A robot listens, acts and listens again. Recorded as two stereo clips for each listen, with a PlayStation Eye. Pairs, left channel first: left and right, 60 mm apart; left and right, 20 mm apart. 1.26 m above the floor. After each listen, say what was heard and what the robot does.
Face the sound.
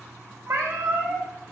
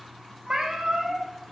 The cat meowing: about 60° right or 120° right. Turn 60° right.
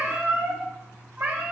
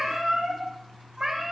So it is at 40° right. Turn 40° right.
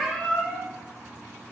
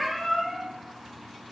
Found it: a cat meowing, straight ahead, 1 to 2 m away.